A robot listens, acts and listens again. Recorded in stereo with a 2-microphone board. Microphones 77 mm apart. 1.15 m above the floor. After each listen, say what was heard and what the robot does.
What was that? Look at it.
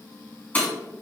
The breaking glass: about 20° left or 160° left. Turn 20° left.
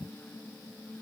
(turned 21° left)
Keep listening.
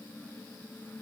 I heard breaking glass, but can't make it out now. It was about straight ahead or 135° left.